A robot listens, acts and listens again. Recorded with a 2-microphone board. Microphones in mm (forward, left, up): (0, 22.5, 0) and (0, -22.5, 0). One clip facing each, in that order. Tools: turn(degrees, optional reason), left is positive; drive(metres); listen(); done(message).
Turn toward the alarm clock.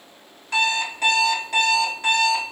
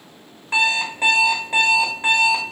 turn(degrees=-20, reason="The alarm clock: about 20° right or 160° right.")
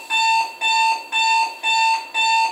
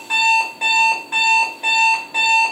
done("Facing the alarm clock, 1 to 2 m away.")